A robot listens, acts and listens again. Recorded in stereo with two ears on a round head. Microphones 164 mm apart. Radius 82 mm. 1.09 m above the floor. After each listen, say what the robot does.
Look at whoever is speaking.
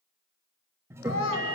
Turn 90° left.
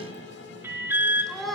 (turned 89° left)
Found it: a child speaking, straight ahead.